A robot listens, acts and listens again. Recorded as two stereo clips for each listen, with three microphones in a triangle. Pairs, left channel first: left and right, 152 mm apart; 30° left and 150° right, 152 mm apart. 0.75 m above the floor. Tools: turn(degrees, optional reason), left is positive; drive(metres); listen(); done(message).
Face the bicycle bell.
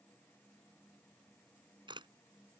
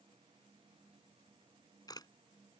listen()
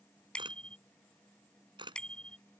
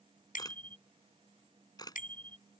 done("Facing the bicycle bell.")